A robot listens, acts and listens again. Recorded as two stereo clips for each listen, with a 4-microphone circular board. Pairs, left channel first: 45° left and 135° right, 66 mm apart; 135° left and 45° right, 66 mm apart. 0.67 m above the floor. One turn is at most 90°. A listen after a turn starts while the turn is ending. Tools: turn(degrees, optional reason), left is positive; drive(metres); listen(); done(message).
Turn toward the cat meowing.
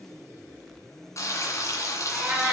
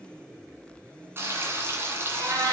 turn(degrees=-55, reason="The cat meowing: 55° right.")
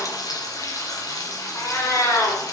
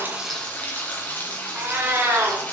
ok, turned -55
done("Facing the cat meowing, 2 to 4 m away.")